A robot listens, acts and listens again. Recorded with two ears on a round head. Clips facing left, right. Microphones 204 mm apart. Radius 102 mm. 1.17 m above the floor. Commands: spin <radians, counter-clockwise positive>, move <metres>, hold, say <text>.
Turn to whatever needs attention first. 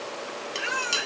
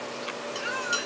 spin 1.57
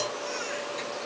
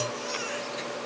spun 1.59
hold
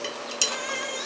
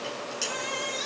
spin -0.26
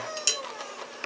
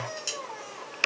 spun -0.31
say Facing the baby crying, over 4 m away.